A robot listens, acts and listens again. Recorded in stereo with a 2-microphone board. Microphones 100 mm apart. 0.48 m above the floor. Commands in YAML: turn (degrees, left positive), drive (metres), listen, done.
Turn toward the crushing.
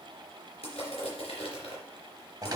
turn: 90
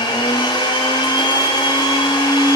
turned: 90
listen: true
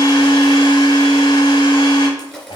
done: "Found it: crushing, straight ahead, 2 to 4 m away."